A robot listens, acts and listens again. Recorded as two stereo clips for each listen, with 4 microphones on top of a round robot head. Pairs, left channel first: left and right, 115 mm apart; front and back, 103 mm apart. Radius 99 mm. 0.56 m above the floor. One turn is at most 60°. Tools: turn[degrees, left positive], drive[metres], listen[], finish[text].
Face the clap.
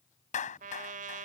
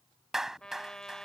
Thought: The clap: 95° left.
Action: turn[60]
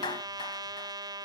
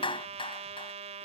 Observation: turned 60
Thought: The clap is now 30° left.
Action: turn[30]
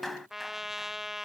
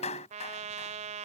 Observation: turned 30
Action: finish[Found it: a clap, straight ahead.]